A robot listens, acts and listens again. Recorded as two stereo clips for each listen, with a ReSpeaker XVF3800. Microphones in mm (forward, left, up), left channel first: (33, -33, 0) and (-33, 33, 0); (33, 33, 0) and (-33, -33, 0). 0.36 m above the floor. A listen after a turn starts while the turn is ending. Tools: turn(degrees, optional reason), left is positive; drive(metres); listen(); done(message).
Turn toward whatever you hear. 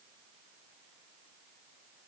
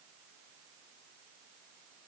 listen()
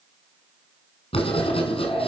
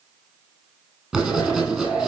turn(degrees=-55, reason="The writing: 55° right.")
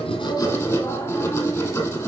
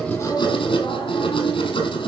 turn(degrees=15, reason="The writing is now 15° left.")
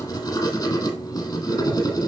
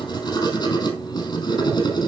done("Facing the writing, 2 to 4 m away.")